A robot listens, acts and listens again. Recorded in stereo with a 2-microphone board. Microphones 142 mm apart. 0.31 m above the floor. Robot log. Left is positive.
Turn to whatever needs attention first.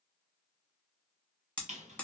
cmd idle
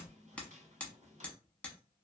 cmd idle
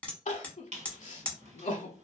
note: The crying: about 55° left or 125° left.
cmd yaw +55
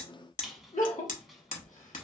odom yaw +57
note: So it is at 65° left.
cmd yaw +65
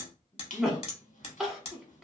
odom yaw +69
end: Facing the crying, under 1 m away.